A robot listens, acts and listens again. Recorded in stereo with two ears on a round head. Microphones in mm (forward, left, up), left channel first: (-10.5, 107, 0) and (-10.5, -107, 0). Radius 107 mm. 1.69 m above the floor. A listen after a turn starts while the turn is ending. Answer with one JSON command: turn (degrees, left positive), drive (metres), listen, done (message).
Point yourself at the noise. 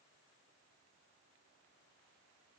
{"listen": true}
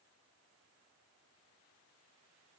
{"listen": true}
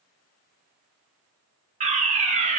{"turn": -30}
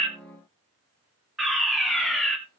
{"done": "Found it: a fire alarm, straight ahead, 2 to 4 m away."}